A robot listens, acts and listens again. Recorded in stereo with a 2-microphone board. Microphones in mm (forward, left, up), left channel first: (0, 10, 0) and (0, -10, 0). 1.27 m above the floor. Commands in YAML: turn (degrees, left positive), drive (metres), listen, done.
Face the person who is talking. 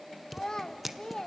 turn: 45
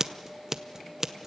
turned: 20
listen: true
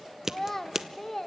turn: 25
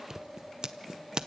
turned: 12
turn: 15
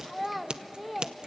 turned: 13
done: "Found it: a child speaking, straight ahead, 1 to 2 m away."